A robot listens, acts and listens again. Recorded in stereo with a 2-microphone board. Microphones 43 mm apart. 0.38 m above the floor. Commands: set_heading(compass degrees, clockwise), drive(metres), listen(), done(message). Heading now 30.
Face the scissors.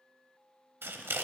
set_heading(100)
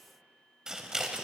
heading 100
set_heading(115)
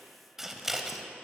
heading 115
done("Facing the scissors.")